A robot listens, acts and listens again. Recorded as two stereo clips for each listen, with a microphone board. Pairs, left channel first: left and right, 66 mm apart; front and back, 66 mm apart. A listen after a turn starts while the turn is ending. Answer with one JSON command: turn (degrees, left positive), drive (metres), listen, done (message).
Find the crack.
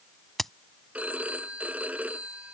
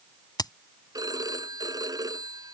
{"done": "Found it: a crack, straight ahead."}